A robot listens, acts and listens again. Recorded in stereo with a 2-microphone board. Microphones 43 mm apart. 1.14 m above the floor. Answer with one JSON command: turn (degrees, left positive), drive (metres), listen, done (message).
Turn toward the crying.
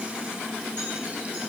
{"listen": true}
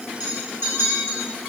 {"listen": true}
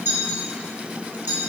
{"done": "I can't make out crying, only a clink."}